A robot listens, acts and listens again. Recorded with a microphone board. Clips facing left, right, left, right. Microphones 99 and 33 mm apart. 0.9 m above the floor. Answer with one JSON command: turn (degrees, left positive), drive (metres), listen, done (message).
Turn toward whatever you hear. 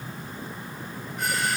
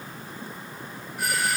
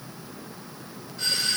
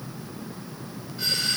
{"turn": -30}
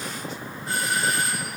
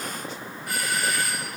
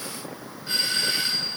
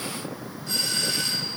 {"turn": 25}
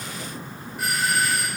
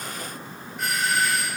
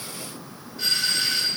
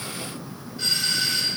{"done": "Found it: a doorbell, straight ahead, over 4 m away."}